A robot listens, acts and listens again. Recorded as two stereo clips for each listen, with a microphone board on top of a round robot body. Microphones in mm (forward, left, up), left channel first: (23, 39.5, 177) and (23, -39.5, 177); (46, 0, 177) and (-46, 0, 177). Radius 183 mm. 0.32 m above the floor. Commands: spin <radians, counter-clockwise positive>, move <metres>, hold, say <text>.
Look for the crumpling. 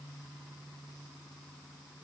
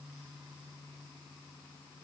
hold
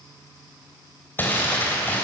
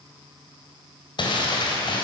spin 0.44
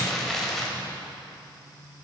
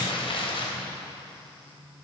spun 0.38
say Found it: crumpling, straight ahead, 2 to 4 m away.